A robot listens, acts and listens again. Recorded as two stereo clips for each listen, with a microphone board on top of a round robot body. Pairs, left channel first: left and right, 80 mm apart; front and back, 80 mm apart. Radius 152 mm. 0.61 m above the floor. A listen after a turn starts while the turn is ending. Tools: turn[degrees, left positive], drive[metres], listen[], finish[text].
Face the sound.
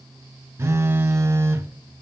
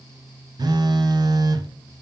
Thought: The phone buzzing: 150° right.
Action: turn[-150]
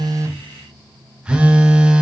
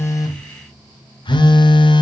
Thought: The phone buzzing is now 10° right.
Action: turn[-10]
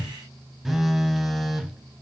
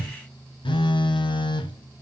Action: finish[Found it: a phone buzzing, straight ahead.]